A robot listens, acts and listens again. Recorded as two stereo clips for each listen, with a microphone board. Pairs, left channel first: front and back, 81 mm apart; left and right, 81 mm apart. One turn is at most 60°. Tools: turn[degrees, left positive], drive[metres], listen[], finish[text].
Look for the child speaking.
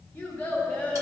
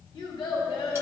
Thought: The child speaking: 75° left.
Action: turn[60]
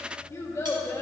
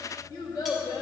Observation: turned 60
Thought: The child speaking is now 65° left.
Action: turn[60]
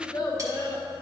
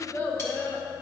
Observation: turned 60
Thought: The child speaking is now 45° left.
Action: turn[45]
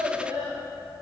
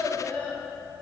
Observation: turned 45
Thought: The child speaking is now 20° left.
Action: turn[20]
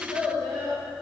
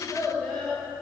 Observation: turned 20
Thought: The child speaking is now 20° left.
Action: turn[20]
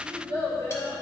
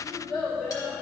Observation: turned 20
Action: finish[Found it: a child speaking, straight ahead.]